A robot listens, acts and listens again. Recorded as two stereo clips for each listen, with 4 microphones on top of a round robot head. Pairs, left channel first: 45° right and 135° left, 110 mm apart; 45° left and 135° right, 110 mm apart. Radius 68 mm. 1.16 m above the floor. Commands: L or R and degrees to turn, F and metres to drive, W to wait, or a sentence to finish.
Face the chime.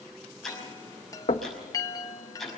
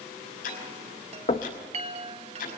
R105
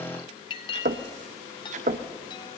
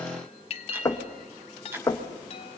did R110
Facing the chime, 1 to 2 m away.